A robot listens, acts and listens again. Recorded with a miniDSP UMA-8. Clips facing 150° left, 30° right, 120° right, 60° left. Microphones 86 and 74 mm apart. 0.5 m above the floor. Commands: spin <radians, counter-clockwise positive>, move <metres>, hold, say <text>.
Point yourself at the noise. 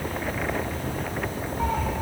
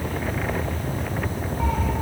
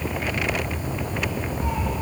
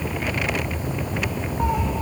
spin 1.22
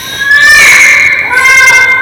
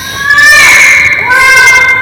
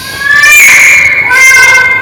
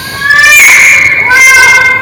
spin -0.26
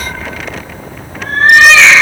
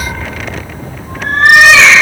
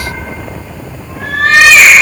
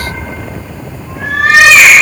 spin -0.26
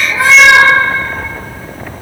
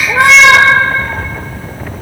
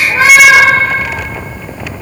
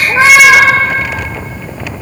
say Found it: a cat meowing, straight ahead, 2 to 4 m away.